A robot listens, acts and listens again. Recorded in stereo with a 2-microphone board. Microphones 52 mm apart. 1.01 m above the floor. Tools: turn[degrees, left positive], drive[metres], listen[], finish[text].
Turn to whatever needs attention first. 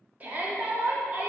Thought: The shout: about 35° right or 145° right.
Action: turn[-35]
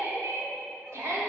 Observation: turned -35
Thought: So it is at 110° right.
Action: turn[-110]
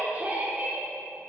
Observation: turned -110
Thought: The shout is now 35° right.
Action: turn[-35]
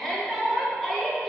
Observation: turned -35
Action: finish[Facing the shout.]